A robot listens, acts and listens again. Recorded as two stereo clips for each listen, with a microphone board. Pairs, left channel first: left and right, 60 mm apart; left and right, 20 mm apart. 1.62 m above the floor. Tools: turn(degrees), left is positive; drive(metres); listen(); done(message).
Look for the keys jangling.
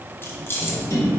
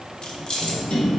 turn(degrees=40)
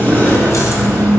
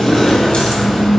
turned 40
listen()
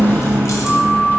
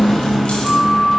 listen()
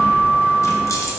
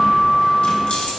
done("I heard keys jangling, but can't make it out now. It was about straight ahead or 100° left.")